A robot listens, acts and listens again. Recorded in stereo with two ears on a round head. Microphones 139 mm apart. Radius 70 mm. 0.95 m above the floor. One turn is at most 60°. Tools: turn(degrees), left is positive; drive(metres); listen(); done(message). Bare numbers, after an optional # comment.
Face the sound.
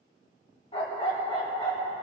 # The dog barking: about 30° left or 150° left.
turn(30)
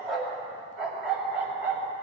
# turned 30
# So it is at 15° right.
turn(-15)
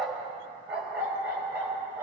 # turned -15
# The dog barking is now 20° right.
turn(-20)
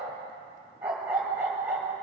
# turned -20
# The dog barking is now 10° right.
turn(-10)
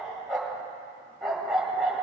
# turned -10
done("Found it: a dog barking, straight ahead, 2 to 4 m away.")